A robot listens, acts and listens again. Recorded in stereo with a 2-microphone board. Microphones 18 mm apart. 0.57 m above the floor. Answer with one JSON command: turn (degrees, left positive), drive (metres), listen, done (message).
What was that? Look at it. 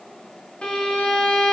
{"turn": 75}
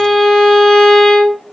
{"turn": 30}
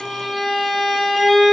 {"done": "Facing the violin."}